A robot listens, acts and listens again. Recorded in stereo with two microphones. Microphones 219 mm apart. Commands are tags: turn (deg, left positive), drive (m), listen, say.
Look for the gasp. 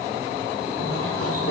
<listen/>
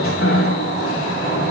<listen/>
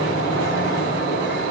<say>I can't make out a gasp to turn to.</say>